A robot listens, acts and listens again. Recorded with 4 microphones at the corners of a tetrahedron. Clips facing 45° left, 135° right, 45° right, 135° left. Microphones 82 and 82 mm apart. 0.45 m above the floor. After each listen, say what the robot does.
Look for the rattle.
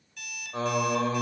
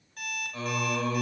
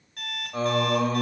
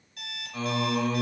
Keep listening.
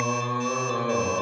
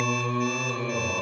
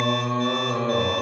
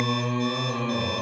Keep listening.
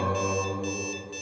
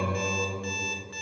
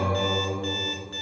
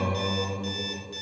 I can't make out a rattle to turn to.